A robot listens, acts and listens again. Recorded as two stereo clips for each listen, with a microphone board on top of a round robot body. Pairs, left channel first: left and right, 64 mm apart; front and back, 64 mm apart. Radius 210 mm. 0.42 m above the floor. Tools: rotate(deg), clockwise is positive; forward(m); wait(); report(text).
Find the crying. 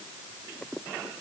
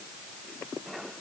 wait()
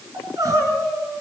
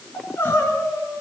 rotate(55)
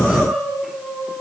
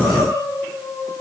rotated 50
report("Found it: crying, straight ahead, over 4 m away.")